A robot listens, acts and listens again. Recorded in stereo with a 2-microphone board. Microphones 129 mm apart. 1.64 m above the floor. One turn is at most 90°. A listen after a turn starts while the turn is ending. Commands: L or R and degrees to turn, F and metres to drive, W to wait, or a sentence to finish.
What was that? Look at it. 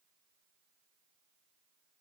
W
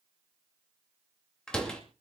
L30
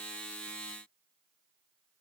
W
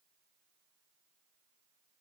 I heard a door slam, but can't make it out now. It was about 25° right or 145° left.